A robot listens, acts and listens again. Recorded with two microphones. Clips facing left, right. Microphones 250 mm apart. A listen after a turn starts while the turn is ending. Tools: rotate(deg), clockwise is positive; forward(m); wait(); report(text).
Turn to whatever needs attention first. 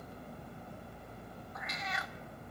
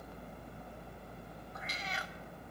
wait()
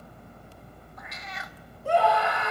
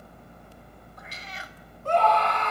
rotate(-30)
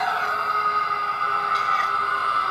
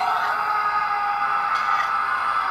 rotate(-135)
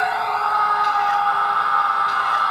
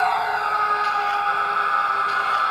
rotate(25)
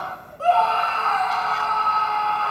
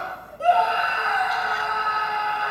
rotate(15)
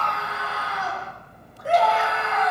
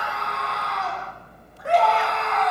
report("Facing the scream.")